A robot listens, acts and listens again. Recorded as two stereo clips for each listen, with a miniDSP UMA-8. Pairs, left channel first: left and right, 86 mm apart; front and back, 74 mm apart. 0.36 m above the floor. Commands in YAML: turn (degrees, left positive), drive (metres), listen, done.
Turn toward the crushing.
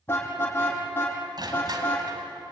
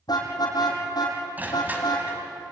turn: -115
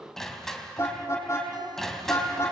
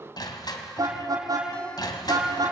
done: "Found it: crushing, straight ahead, 2 to 4 m away."